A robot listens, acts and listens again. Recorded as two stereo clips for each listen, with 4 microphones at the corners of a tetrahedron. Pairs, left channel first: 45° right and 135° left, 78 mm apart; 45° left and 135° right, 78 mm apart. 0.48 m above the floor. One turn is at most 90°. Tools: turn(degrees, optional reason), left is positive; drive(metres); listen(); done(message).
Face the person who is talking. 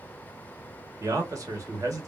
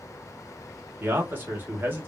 turn(degrees=90, reason="The man speaking: 165° left.")
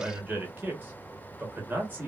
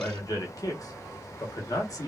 turn(degrees=75, reason="The man speaking is now 75° left.")
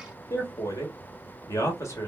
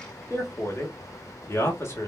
done("Found it: a man speaking, straight ahead, 1 to 2 m away.")